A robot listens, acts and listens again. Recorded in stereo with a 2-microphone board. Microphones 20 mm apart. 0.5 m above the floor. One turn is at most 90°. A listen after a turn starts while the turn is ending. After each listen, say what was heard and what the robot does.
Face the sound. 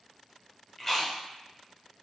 The chewing: about 25° left or 155° left. Turn 25° left.
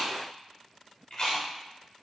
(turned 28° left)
So it is at 130° left. Turn 90° left.
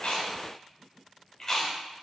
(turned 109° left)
The chewing is now 20° left. Turn 20° left.
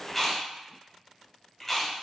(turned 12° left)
Facing the chewing.